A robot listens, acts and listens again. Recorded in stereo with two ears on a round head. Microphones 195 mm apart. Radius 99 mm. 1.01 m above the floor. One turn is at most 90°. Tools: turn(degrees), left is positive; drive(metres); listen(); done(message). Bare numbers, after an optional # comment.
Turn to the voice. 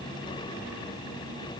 listen()
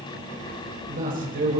# The man speaking: about 45° right or 135° right.
turn(-45)
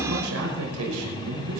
# So it is at 95° right.
turn(-90)
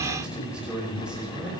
done("Found it: a man speaking, straight ahead, over 4 m away.")